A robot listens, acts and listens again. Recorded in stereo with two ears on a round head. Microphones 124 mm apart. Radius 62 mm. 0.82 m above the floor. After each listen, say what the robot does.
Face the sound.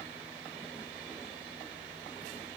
Keep listening.
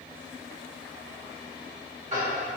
Turn 50° right.
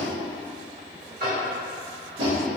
Turn 75° right.
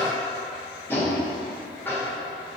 Turn 15° left.
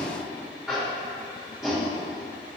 Found it: tapping, straight ahead, 1 to 2 m away.